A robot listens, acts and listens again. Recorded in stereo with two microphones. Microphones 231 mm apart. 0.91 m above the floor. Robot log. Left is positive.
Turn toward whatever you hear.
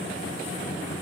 cmd idle
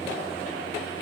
cmd idle
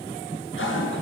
note: The toilet flushing: about 55° left or 125° left.
cmd yaw +55
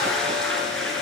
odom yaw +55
end: Facing the toilet flushing, over 4 m away.